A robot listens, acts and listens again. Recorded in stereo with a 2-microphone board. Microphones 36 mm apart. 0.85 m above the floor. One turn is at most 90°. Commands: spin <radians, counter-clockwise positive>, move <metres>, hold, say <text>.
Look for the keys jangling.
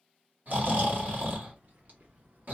spin -0.96
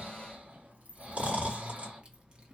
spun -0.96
spin -0.44
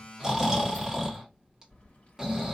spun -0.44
spin 0.61
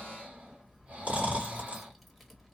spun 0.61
say Facing the keys jangling.